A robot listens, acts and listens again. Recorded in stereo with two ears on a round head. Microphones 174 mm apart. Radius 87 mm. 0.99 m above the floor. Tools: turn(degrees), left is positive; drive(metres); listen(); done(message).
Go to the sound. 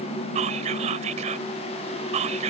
turn(degrees=-35)
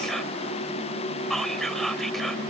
drive(metres=1.0)
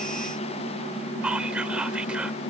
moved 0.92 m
drive(metres=1.0)
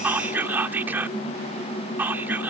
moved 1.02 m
turn(degrees=-10)
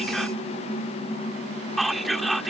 drive(metres=1.0)
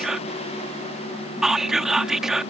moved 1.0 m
drive(metres=1.0)
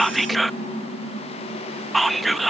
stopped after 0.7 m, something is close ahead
done("Arrived at the whispering, straight ahead.")